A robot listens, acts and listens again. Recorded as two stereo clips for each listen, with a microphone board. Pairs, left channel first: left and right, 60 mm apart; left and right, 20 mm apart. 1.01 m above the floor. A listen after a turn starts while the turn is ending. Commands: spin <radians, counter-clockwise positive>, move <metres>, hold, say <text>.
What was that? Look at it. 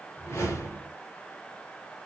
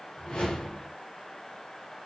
spin 0.87
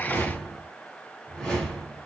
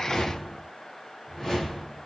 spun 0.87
spin 0.17
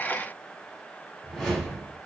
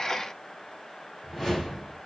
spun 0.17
say Found it: a whoosh, straight ahead.